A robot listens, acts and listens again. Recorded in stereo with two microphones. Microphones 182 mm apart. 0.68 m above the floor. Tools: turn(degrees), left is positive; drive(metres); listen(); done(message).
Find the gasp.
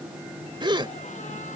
turn(degrees=-25)
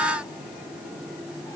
listen()
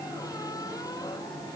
done("I heard a gasp, but can't make it out now. It was about straight ahead or 130° right.")